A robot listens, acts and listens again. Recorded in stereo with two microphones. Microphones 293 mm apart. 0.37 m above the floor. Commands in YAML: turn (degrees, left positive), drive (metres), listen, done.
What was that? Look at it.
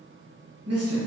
turn: -55
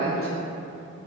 turn: -50
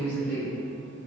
turn: -40
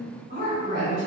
turn: -40
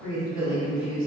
turn: -10
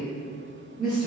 done: "Found it: a woman speaking, straight ahead, 1 to 2 m away."